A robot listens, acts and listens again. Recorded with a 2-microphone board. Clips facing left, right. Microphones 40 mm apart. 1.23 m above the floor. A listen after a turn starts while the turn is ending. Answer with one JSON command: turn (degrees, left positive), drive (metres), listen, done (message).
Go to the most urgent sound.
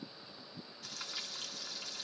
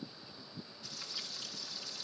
{"listen": true}
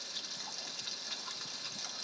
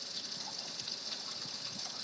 {"listen": true}
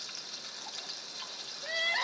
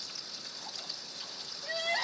{"turn": 30}
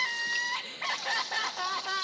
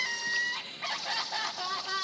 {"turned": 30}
{"turn": 120}
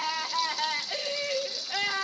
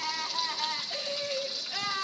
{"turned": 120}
{"turn": 40}
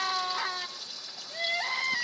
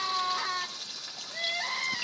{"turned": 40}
{"drive": 1.0}
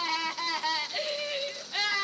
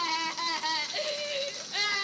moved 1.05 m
{"drive": 1.0}
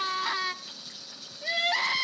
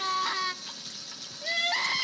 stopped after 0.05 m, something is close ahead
{"done": "Arrived at the crying, straight ahead."}